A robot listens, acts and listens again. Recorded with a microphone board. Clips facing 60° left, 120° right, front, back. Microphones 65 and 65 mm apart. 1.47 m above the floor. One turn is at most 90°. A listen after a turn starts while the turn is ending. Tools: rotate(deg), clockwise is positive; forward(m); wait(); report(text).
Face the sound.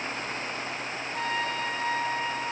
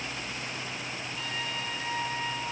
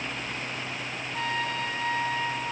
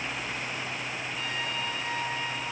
rotate(-35)
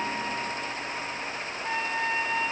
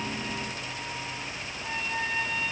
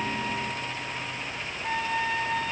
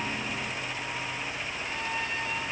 report("Found it: a trumpet, straight ahead, 2 to 4 m away.")